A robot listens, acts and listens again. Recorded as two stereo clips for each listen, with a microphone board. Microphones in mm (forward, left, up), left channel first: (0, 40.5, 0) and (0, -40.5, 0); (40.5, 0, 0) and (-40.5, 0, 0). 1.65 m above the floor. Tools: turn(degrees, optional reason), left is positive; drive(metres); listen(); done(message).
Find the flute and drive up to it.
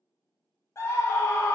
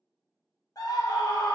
listen()
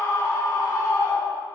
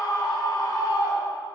listen()
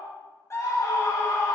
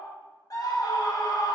done("I can't make out a flute to turn to.")